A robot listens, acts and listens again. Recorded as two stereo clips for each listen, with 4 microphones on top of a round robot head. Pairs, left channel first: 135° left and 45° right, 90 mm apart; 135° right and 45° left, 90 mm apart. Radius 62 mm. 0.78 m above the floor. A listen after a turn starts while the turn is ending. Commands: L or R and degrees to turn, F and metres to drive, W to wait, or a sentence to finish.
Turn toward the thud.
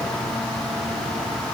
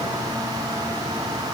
W
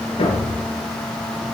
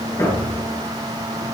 L165
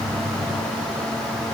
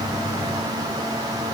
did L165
I heard a thud from this way, but can't make it out now.